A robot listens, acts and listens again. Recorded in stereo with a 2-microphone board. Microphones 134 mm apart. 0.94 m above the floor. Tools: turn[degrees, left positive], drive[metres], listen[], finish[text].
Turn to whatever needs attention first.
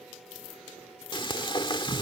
Action: listen[]
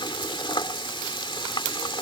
Action: listen[]
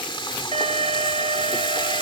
Thought: The alarm: about 50° right or 130° right.
Action: turn[-50]
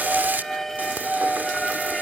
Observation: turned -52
Action: finish[Facing the alarm.]